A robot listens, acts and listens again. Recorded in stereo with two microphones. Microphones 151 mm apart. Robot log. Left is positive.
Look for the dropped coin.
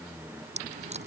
note: The dropped coin: about 45° right or 135° right.
cmd yaw -45
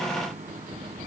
cmd idle
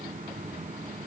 end: I heard a dropped coin, but can't make it out now. It was about straight ahead or 90° right.